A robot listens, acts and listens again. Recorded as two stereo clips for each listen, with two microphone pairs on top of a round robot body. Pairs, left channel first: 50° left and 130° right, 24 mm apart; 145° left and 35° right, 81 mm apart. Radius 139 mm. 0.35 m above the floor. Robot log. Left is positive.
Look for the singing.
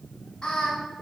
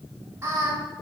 note: The singing: 20° left.
cmd yaw +20
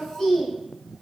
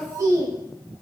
note: The singing is now 10° left.
cmd yaw +10
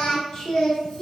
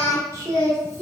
note: The singing is now 20° left.
cmd yaw +20
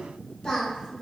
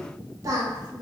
end: Found it: singing, straight ahead, 1 to 2 m away.